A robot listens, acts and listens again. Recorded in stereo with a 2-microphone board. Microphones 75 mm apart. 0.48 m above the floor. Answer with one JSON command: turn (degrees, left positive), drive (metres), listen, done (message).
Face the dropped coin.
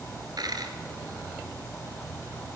{"turn": -65}
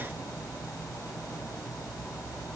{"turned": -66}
{"listen": true}
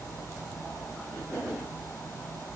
{"done": "I heard a dropped coin, but can't make it out now. It was about straight ahead or 50° right."}